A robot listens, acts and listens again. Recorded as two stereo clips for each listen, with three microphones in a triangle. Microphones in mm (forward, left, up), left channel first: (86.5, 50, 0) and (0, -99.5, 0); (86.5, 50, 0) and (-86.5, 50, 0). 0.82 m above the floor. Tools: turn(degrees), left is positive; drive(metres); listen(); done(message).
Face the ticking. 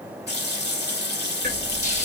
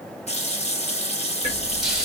turn(degrees=-130)
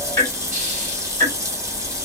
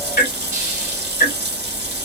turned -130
turn(degrees=-15)
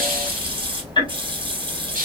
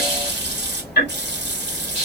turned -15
done("Found it: ticking, straight ahead.")